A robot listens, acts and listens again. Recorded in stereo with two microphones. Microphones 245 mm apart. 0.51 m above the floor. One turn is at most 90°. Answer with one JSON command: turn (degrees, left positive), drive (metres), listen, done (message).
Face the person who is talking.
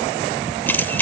{"listen": true}
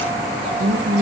{"turn": -50}
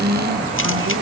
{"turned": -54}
{"turn": -75}
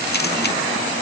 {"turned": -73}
{"listen": true}
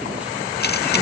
{"listen": true}
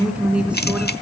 {"done": "Facing the woman speaking, over 4 m away."}